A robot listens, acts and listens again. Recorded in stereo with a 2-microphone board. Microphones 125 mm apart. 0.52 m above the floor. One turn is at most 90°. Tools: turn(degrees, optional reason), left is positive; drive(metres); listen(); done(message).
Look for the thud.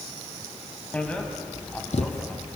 turn(degrees=65, reason="The thud: about 65° left or 115° left.")
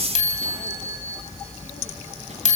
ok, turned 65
listen()
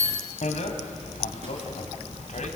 done("I heard a thud, but can't make it out now. It was about straight ahead or 50° left.")